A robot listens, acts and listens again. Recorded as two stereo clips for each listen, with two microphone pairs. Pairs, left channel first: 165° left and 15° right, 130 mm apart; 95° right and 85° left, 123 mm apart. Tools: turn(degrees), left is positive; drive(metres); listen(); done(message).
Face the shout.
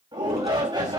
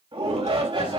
turn(degrees=40)
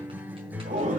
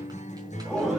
done("Facing the shout.")